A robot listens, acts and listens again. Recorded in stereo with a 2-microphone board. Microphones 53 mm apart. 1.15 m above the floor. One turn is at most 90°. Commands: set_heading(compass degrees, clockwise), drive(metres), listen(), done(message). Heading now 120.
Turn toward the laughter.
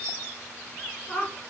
set_heading(95)
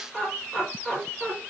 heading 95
done("Found it: laughter, straight ahead, 2 to 4 m away.")